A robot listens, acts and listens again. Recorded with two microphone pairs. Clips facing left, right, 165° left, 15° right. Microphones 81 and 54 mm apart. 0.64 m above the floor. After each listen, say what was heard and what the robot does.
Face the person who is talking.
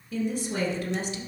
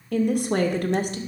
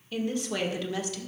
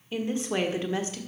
The woman speaking: 65° right. Turn 65° right.
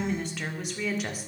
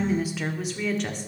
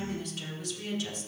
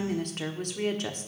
Facing the woman speaking.